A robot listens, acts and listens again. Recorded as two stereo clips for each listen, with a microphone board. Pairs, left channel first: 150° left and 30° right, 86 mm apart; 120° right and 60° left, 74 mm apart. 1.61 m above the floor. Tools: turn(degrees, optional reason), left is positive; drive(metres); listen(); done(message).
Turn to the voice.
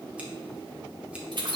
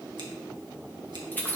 listen()
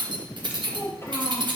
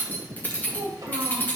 turn(degrees=85, reason="The child speaking: 85° left.")
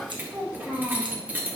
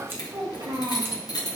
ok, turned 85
turn(degrees=45, reason="The child speaking is now 45° left.")
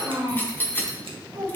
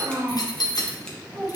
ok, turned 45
done("Found it: a child speaking, straight ahead, over 4 m away.")